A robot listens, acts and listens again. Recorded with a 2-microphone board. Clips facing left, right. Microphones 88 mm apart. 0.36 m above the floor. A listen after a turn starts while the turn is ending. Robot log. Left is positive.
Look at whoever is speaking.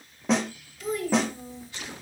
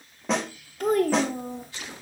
note: The child speaking: about 55° right or 125° right.
cmd yaw -55
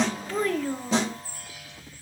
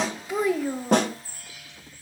note: So it is at 10° right.
cmd yaw -10
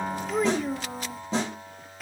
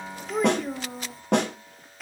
end: Found it: a child speaking, straight ahead.